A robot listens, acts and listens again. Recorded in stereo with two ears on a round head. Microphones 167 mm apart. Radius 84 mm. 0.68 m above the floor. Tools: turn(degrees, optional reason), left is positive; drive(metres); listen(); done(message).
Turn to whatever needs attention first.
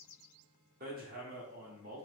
listen()
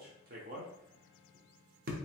listen()
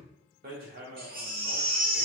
turn(degrees=-50, reason="The baby crying: about 50° right or 130° right.")
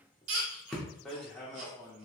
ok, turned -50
turn(degrees=-75, reason="So it is at 75° right.")
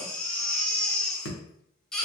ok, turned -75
done("Facing the baby crying, under 1 m away.")